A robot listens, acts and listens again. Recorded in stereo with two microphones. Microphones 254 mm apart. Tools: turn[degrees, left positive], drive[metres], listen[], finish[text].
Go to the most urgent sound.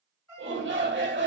Thought: The shout: about 50° right or 130° right.
Action: turn[-50]
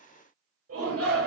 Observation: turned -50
Thought: So it is at 75° right.
Action: turn[-75]
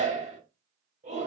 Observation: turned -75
Thought: The shout is now 30° right.
Action: turn[-30]
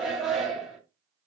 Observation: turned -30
Action: drive[1.0]
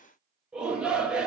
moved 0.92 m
Action: drive[1.0]
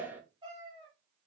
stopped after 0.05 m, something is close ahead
Thought: The shout is now 10° right.
Action: turn[-10]
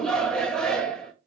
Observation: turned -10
Action: finish[I am next to the shout.]